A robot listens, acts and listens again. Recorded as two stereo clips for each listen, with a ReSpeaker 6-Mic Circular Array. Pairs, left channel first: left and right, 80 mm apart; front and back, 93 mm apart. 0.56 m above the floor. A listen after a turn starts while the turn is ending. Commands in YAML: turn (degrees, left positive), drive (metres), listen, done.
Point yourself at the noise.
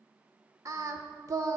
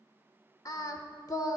turn: -50
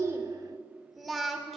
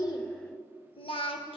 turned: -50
done: "Found it: singing, straight ahead."